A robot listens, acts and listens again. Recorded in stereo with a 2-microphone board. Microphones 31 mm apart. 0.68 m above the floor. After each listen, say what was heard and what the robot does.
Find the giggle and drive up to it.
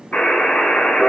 Keep listening.
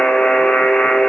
Keep listening.
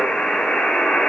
I can't make out a giggle to turn to.